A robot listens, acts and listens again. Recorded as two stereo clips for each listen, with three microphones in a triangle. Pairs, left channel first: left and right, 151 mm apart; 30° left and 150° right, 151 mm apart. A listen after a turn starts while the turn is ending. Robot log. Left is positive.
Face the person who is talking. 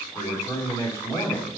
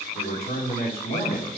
note: The man speaking: 20° left.
cmd yaw +20
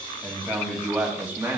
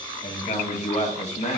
note: The man speaking is now 15° right.
cmd yaw -15
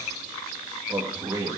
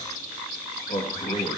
note: The man speaking is now 30° right.
cmd yaw -30
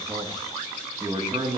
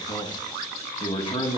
note: The man speaking is now 35° right.
cmd yaw -35
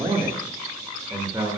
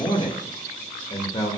note: The man speaking is now 25° right.
cmd yaw -25
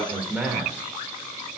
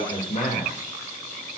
note: The man speaking is now 10° right.
cmd yaw -10
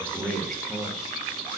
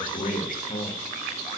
end: Facing the man speaking.